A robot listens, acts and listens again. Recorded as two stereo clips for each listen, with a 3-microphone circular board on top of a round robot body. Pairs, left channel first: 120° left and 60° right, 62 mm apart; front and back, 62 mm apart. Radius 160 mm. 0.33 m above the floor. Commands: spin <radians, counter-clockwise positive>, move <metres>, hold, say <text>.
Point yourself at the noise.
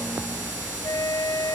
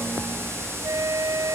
spin 2.53
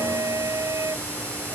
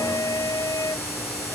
spin -0.44
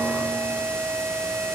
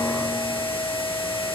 say Found it: a flute, straight ahead.